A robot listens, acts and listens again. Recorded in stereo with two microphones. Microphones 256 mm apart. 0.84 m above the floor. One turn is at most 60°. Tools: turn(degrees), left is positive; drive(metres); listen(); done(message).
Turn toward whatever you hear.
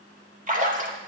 turn(degrees=-30)
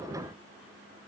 listen()
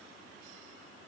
done("I heard a splash, but can't make it out now. It was about straight ahead or 120° right.")